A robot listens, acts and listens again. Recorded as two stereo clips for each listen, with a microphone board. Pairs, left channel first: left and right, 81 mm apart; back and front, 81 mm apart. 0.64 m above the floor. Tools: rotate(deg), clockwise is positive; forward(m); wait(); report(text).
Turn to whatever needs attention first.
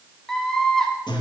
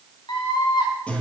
rotate(-175)
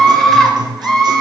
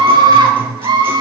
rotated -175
report("Facing the scream, 2 to 4 m away.")